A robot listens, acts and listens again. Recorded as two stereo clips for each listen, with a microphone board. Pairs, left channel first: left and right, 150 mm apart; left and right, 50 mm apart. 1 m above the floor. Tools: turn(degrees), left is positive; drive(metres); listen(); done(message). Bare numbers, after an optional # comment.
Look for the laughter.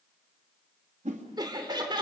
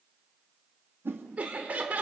# The laughter: about 30° right or 150° right.
turn(-30)
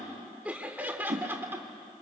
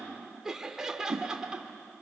# So it is at 15° right.
turn(-15)
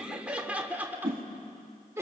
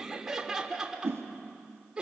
# The laughter is now 20° right.
turn(-20)
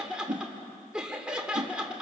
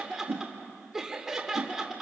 done("Facing the laughter.")